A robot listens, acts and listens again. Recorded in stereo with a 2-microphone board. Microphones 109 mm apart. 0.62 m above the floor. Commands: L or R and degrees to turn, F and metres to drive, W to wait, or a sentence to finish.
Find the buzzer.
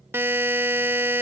R20
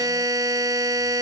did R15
R145
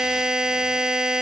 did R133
R10
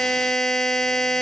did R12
Found it: a buzzer, straight ahead.